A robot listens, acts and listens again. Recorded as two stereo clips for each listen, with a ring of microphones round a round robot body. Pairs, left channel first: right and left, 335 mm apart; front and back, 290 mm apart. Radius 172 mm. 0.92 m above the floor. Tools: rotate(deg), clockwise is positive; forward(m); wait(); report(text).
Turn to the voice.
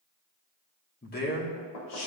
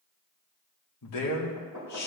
rotate(40)
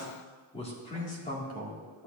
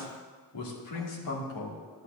rotate(30)
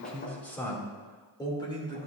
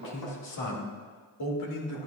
rotate(15)
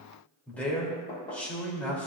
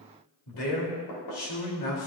report("Found it: a man speaking, straight ahead, 2 to 4 m away.")